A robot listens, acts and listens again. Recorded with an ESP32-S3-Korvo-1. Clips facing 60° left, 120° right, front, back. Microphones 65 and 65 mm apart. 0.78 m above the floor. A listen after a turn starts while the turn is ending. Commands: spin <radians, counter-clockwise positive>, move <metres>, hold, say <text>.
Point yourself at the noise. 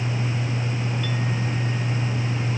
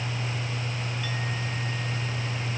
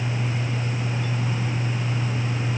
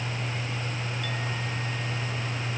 hold
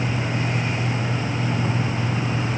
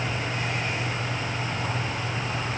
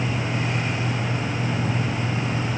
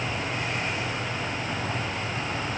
hold
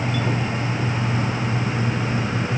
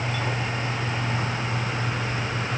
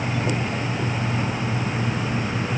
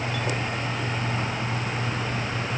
say I can't make out anything to turn to.